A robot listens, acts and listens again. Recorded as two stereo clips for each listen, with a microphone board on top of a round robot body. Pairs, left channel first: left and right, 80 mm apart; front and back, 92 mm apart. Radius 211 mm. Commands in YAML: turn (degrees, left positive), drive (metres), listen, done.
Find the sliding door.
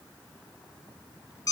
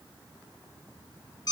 listen: true
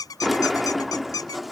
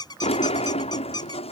done: "Facing the sliding door."